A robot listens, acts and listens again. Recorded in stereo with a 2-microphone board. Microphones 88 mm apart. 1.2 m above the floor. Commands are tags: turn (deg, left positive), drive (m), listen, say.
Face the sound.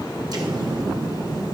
<turn deg="-50"/>
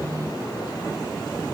<listen/>
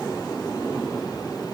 <say>I heard an explosion, but can't make it out now. It was about straight ahead or 80° right.</say>